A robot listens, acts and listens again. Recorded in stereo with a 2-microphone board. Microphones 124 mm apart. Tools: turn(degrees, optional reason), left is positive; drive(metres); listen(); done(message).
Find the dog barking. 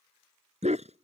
turn(degrees=-90)
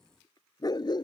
turn(degrees=40, reason="So it is at 40° left.")
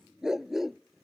done("Found it: a dog barking, straight ahead.")